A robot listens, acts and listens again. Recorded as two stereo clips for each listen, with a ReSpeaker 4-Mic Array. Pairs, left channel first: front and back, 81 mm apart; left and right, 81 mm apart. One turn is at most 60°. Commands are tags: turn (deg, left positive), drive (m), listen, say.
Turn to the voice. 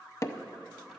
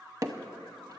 <listen/>
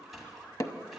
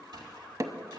<listen/>
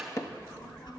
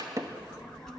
<say>Facing the child speaking, 1 to 2 m away.</say>